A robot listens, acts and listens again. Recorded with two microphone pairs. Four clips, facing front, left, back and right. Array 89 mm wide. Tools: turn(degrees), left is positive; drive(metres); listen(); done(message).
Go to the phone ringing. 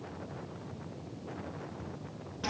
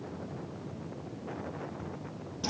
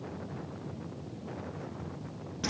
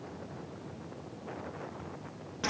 listen()
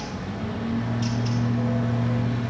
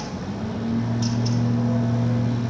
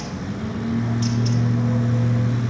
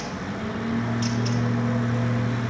listen()
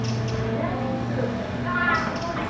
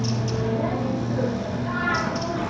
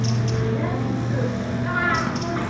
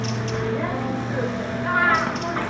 done("I can't make out a phone ringing to turn to.")